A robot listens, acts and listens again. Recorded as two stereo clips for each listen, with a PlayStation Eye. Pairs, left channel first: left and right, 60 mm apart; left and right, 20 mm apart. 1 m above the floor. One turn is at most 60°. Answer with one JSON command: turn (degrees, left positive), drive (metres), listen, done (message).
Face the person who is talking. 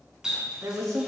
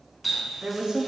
{"turn": -55}
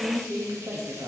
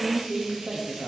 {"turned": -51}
{"turn": -60}
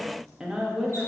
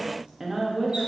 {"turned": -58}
{"turn": -10}
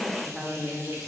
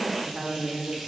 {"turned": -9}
{"done": "Facing the woman speaking, 1 to 2 m away."}